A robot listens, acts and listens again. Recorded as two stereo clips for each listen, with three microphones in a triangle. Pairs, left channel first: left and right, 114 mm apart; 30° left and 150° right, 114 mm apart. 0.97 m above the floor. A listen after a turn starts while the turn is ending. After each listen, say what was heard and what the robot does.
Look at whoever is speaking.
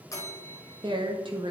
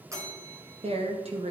The woman speaking: 130° right. Turn 130° right.
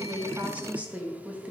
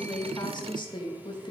The woman speaking is now 15° right. Turn 15° right.
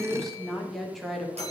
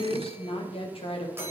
Found it: a woman speaking, straight ahead.